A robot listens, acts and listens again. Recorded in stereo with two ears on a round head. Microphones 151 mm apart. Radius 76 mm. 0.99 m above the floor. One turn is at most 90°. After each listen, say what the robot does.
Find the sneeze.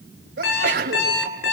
Turn 70° right.
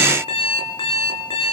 Keep listening.
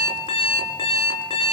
I heard a sneeze, but can't make it out now. It was about straight ahead or 40° right.